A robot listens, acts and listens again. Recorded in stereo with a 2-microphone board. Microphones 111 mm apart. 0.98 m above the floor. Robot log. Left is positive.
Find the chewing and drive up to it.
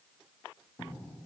cmd idle
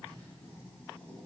cmd idle
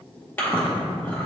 note: The chewing: about 15° left or 165° left.
cmd yaw +15
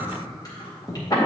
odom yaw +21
note: So it is at 140° left.
cmd yaw +140
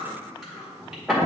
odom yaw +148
cmd fwd 1.0
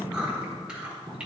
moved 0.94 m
note: The chewing is now 10° right.
cmd yaw -10
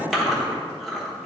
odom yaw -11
cmd fwd 1.0
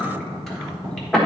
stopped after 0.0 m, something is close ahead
end: Arrived at the chewing, straight ahead.